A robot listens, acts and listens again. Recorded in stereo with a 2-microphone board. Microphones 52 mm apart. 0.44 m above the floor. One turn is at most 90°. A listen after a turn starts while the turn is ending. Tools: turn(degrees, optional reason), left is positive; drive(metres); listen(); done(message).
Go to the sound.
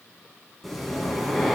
turn(degrees=30)
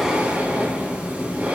turn(degrees=-30, reason="So it is at 30° right.")
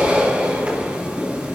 turn(degrees=-30, reason="The breathing is now 30° right.")
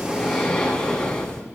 turn(degrees=15, reason="The breathing is now 15° left.")
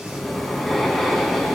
drive(metres=1.0)
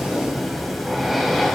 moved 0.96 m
drive(metres=1.0)
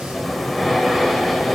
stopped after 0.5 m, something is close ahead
done("I am next to the breathing.")